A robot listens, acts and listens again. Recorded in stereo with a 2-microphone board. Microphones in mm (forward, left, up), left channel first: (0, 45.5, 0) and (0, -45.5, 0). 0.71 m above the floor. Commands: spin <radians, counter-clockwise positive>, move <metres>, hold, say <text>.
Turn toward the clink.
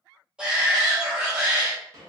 hold
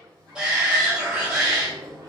hold
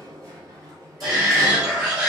say I can't make out a clink to turn to.